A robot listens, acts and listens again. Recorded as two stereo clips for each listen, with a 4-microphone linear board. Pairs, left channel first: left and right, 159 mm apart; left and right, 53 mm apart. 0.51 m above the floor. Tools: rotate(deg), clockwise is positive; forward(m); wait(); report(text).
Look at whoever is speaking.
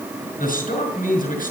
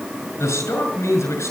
rotate(-65)
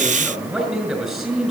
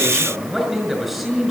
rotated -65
report("Found it: a man speaking, straight ahead.")